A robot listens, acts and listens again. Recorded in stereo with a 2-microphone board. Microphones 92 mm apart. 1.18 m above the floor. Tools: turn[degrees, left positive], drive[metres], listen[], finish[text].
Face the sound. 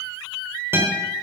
Thought: The guitar: about 25° right or 155° right.
Action: turn[-25]
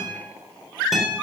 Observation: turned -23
Action: finish[Found it: a guitar, straight ahead, over 4 m away.]